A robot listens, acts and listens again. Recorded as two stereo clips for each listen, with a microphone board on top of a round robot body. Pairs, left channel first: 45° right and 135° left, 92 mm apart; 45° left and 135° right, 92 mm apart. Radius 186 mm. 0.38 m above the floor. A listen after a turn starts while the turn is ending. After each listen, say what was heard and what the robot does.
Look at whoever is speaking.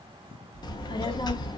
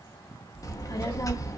Found it: a child speaking, straight ahead.